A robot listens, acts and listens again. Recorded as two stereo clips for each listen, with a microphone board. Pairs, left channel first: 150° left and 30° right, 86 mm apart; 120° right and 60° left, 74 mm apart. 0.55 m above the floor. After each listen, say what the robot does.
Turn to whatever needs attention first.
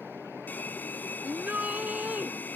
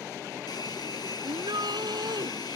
Turn 40° left.
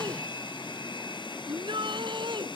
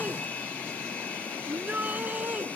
Turn 10° right.
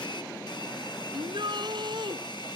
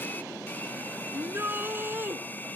Found it: a shout, straight ahead.